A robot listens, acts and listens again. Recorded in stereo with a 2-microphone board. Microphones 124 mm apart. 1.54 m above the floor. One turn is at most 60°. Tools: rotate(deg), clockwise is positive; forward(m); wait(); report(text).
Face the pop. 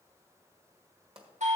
rotate(45)
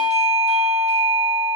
wait()
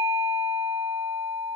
report("I heard a pop, but can't make it out now. It was about straight ahead or 90° right.")